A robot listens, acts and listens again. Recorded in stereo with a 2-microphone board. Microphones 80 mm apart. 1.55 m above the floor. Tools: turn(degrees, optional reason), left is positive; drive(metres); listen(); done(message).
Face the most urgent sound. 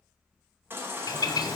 turn(degrees=-30, reason="The baby crying: about 30° right or 150° right.")
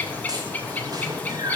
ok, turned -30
turn(degrees=-120, reason="So it is at 120° right.")
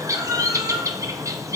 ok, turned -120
turn(degrees=-55, reason="The baby crying is now 55° right.")
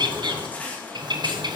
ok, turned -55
turn(degrees=20, reason="The baby crying is now 20° left.")
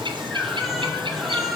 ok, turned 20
done("Found it: a baby crying, straight ahead, 1 to 2 m away.")